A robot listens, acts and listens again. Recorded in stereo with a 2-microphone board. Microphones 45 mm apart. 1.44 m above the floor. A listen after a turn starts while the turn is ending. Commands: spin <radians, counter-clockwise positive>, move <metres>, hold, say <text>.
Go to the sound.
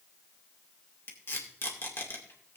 spin 1.05
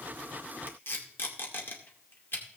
spin 0.96
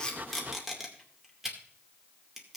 move 1.0
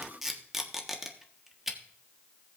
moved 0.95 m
spin -0.17
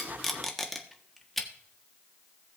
move 1.0
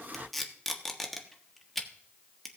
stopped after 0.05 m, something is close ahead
say Arrived at the tape being pulled, straight ahead.